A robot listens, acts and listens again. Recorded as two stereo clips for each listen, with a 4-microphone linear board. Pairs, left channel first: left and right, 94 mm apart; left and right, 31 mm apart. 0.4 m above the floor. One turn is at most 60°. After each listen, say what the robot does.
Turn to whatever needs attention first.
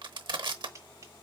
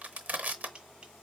Keep listening.
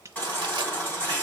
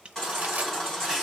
Turn 20° left.
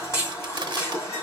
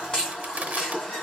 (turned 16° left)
Turn 60° left.
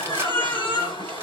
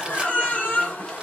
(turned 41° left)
Turn 60° left.
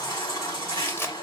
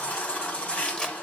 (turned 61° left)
Turn 45° left.
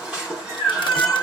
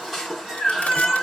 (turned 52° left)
Turn 10° right.
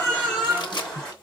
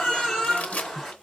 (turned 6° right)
Found it: a baby crying, straight ahead, 2 to 4 m away.